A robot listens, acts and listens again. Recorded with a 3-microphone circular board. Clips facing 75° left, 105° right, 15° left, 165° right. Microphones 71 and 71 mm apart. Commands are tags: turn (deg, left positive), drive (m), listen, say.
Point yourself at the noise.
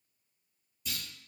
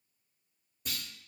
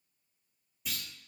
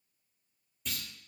<turn deg="-70"/>
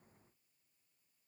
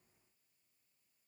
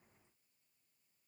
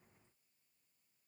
<say>Facing where the clunk came from. I can't hear it now.</say>